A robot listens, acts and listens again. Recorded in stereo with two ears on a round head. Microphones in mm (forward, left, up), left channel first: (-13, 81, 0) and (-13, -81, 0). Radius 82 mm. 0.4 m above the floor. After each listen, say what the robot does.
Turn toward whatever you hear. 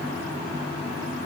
Keep listening.
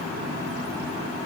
Keep listening.
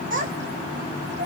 Turn 50° right.
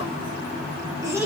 Turn 15° right.
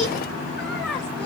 Facing the child speaking, 1 to 2 m away.